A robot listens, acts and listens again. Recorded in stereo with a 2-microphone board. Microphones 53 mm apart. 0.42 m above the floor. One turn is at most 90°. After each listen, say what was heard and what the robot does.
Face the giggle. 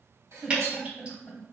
The giggle: about 25° left or 155° left. Turn 25° left.
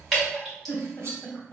So it is at 125° left. Turn 90° left.
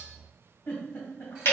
The giggle is now 60° left. Turn 60° left.
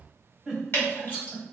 Found it: a giggle, straight ahead.